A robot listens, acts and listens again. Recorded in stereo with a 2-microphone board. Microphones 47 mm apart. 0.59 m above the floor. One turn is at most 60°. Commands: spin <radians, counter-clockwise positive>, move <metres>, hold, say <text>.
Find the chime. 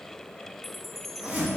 spin 0.52
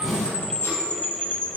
spin 1.05
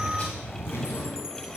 spin 1.05
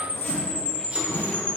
spin 0.52
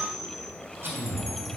say Found it: a chime, straight ahead, under 1 m away.